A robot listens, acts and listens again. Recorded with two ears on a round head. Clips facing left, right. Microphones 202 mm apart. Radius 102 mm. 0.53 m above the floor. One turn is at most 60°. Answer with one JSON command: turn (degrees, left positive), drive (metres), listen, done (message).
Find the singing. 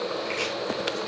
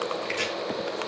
{"listen": true}
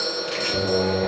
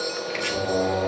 {"turn": 35}
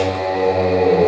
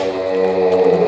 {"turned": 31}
{"turn": 10}
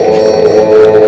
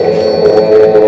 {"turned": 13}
{"done": "Facing the singing."}